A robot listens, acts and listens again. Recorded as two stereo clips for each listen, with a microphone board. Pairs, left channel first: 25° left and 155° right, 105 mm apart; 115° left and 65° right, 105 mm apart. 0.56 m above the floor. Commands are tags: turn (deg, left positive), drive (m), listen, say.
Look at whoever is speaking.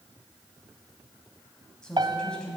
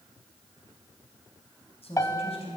<turn deg="105"/>
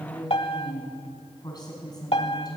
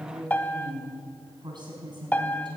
<turn deg="-25"/>
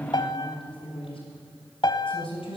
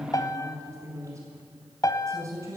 <say>Facing the woman speaking.</say>